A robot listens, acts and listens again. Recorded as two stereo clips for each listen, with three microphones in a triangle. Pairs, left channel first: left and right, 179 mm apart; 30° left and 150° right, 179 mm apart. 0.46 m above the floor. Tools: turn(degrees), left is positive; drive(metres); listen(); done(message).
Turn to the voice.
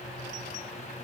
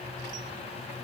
listen()
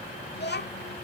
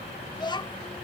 turn(degrees=90)
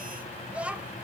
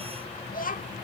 done("Facing the child speaking.")